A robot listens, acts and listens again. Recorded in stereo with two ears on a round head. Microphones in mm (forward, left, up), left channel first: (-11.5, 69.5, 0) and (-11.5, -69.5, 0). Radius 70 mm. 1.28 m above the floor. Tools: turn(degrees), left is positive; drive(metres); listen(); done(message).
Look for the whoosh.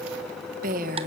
listen()
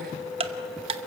listen()
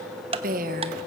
done("I can't make out a whoosh to turn to.")